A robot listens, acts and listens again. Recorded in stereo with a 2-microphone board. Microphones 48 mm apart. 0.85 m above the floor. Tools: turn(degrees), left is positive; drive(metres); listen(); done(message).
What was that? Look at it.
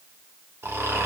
turn(degrees=-65)
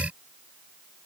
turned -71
listen()
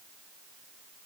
listen()
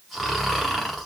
done("Facing the snoring, under 1 m away.")